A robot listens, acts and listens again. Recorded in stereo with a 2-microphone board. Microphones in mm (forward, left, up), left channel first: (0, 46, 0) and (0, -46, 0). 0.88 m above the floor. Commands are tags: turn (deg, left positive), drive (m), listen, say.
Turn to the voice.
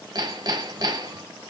<listen/>
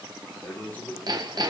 <turn deg="20"/>
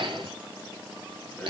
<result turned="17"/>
<listen/>
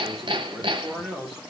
<say>Facing the man speaking.</say>